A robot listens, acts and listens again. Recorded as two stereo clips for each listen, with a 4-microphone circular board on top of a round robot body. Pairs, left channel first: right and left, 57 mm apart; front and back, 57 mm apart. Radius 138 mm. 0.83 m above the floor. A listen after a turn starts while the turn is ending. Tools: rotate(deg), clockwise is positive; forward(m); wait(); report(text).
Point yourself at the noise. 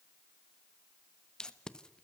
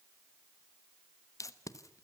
rotate(15)
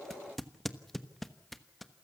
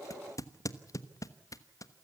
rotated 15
report("Facing the tape being pulled.")